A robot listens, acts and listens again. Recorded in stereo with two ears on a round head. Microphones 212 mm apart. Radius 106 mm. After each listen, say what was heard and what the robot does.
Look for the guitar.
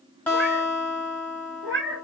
Turn 30° left.
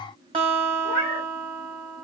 So it is at 25° right. Turn 25° right.
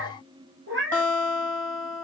The guitar is now 10° left. Turn 10° left.
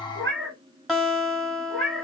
Facing the guitar, 1 to 2 m away.